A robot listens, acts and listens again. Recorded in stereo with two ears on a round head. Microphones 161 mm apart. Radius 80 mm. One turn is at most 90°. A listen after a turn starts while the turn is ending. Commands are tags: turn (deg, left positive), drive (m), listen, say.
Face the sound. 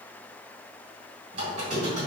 <turn deg="-40"/>
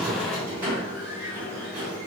<turn deg="-15"/>
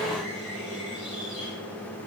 <say>Facing the squeak.</say>